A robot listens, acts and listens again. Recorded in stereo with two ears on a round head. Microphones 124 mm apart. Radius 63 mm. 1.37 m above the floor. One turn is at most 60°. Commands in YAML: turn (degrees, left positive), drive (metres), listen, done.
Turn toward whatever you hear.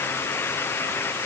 listen: true
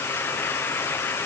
listen: true
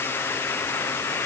done: "I can't make out anything to turn to."